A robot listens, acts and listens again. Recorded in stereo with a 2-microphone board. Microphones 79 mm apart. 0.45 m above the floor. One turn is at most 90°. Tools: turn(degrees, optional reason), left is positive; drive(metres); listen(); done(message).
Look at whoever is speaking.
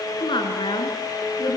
turn(degrees=90)
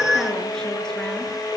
listen()
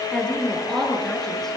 done("Found it: a woman speaking, straight ahead, over 4 m away.")